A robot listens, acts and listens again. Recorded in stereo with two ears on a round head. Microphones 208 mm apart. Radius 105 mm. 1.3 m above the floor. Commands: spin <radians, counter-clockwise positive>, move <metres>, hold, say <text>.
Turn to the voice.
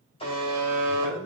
spin 1.31
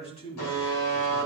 spin 0.44
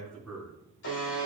say Found it: a man speaking, straight ahead.